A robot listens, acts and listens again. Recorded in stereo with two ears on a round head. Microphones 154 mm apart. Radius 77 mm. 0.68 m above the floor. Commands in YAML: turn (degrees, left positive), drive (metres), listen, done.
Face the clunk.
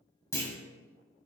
turn: 20
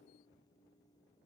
listen: true
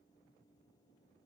done: "I heard a clunk, but can't make it out now. It was about straight ahead or 140° left."